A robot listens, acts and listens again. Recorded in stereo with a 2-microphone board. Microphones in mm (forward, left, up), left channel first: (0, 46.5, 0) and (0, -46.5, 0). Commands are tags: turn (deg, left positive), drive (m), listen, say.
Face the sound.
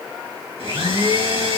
<turn deg="-90"/>
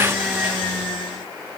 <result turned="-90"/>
<say>Found it: a blender, straight ahead.</say>